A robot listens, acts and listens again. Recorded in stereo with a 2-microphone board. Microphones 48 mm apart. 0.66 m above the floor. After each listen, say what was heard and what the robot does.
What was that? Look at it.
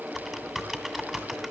Turn 30° left.
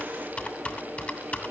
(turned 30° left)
So it is at 150° left. Turn 150° left.
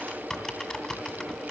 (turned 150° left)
The typing on a keyboard is now 10° left. Turn 10° left.
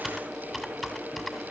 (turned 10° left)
Facing the typing on a keyboard, 2 to 4 m away.